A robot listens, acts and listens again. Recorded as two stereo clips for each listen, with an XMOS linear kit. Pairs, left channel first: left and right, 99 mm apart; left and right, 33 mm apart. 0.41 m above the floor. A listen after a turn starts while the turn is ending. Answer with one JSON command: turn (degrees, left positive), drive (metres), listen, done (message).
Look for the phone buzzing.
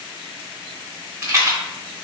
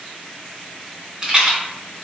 {"listen": true}
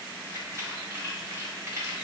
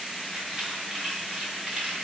{"listen": true}
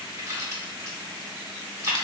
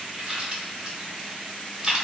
{"done": "I can't make out a phone buzzing to turn to."}